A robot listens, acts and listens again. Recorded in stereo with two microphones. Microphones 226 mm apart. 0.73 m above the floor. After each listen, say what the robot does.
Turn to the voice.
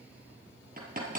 Keep listening.
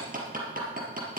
Keep listening.
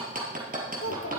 Turn 90° left.
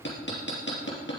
Keep listening.
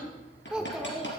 Facing the child speaking.